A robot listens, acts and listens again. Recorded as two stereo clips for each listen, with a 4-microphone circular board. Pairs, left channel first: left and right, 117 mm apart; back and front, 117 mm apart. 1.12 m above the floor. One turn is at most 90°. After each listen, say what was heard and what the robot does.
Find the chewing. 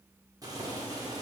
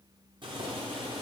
Keep listening.
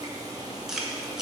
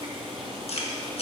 The chewing: 175° right. Turn 90° right.
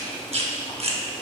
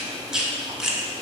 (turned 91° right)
The chewing is now 85° right. Turn 85° right.
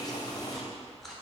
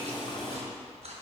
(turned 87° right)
Found it: chewing, straight ahead.